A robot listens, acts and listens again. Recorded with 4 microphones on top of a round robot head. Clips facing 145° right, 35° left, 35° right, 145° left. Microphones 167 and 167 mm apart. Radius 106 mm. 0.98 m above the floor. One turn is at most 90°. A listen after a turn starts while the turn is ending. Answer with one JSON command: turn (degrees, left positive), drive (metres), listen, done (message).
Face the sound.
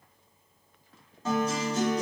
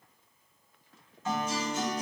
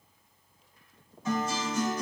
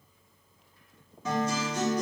{"turn": 90}
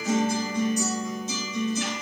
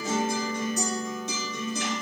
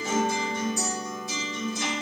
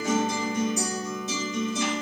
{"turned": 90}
{"turn": 75}
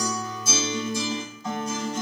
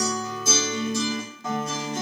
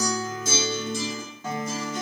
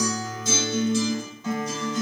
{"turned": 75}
{"done": "Found it: a guitar, straight ahead."}